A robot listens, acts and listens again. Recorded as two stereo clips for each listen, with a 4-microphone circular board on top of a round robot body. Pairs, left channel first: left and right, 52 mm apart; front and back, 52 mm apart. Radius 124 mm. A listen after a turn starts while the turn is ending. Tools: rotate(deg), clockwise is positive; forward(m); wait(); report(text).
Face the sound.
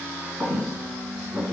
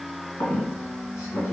rotate(30)
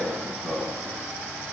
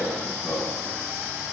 report("Facing the squeak.")